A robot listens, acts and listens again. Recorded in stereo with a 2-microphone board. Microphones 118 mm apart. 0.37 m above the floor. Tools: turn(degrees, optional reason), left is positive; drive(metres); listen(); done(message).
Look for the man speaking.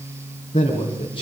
turn(degrees=40, reason="The man speaking: about 40° left or 140° left.")
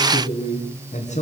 turn(degrees=110, reason="So it is at 110° left.")
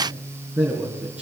turn(degrees=-10, reason="The man speaking is now 10° right.")
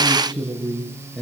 done("Found it: a man speaking, straight ahead.")